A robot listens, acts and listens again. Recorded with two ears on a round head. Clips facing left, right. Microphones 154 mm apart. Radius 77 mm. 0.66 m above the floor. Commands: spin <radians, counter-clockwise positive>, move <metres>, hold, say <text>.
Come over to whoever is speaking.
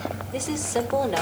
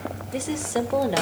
spin -0.52
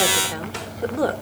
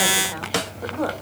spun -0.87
spin 0.79
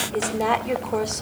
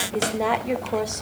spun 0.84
move 1.0
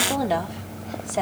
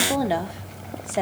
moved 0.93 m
move 1.0
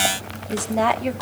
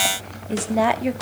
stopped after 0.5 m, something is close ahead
say Arrived at the woman speaking, straight ahead.